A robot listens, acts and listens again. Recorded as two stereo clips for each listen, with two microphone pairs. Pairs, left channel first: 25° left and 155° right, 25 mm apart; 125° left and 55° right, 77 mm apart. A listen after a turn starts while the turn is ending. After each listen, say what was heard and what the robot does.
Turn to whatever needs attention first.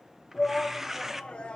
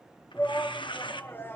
The shout: 60° left. Turn 60° left.
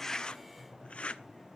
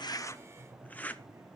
Keep listening.
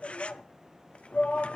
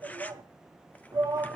The shout is now 10° right. Turn 10° right.
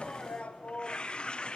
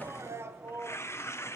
Found it: a shout, straight ahead, 1 to 2 m away.